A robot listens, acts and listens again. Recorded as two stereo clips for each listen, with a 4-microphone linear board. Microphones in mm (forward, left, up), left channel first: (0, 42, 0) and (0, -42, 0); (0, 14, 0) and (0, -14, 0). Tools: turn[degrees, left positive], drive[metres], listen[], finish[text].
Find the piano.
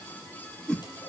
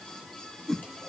Action: listen[]
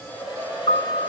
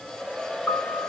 Thought: The piano: about 75° left or 105° left.
Action: turn[75]
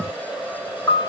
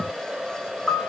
Thought: So it is at 30° left.
Action: turn[30]
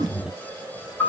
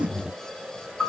Thought: The piano is now 20° left.
Action: turn[20]
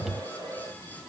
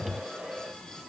Action: listen[]
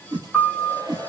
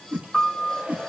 Action: finish[Facing the piano, over 4 m away.]